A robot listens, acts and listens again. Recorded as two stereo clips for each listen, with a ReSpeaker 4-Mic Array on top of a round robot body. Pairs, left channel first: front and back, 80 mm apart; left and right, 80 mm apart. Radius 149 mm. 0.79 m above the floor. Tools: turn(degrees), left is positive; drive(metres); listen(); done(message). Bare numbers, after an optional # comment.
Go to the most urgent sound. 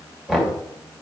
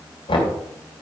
listen()
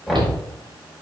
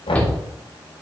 # The shout: 165° left.
turn(165)
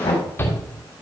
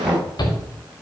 # The shout is now 65° left.
turn(65)
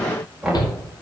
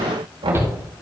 # The shout is now 30° right.
turn(-30)
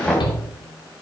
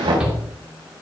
# The shout is now 10° right.
turn(-10)
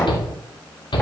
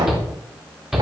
drive(1.0)
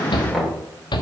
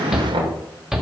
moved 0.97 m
drive(1.0)
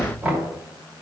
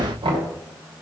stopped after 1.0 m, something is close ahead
listen()
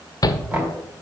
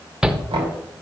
# The shout is now 10° right.
turn(-10)
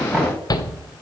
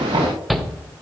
done("I am next to the shout.")